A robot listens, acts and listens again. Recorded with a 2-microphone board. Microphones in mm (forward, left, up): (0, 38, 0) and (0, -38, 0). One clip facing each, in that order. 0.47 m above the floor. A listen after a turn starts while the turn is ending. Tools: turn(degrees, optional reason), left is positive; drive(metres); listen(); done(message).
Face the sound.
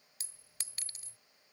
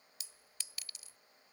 turn(degrees=40, reason="The clink: about 40° left or 140° left.")
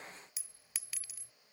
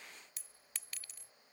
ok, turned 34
done("Found it: a clink, straight ahead.")